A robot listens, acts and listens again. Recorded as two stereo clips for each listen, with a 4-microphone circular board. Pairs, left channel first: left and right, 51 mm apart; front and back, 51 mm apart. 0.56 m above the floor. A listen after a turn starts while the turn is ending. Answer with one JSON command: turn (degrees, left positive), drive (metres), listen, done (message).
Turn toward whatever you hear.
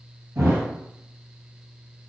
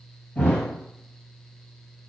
{"turn": -65}
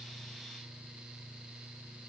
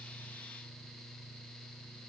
{"done": "I heard a thud from this way, but can't make it out now."}